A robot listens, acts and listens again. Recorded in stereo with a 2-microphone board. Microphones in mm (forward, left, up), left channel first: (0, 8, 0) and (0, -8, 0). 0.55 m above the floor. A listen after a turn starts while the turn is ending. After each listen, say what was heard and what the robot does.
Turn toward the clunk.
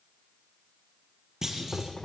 The clunk: about 30° right or 150° right. Turn 30° right.
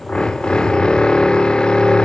Keep listening.
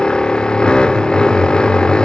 I heard a clunk, but can't make it out now. It was about straight ahead or 120° right.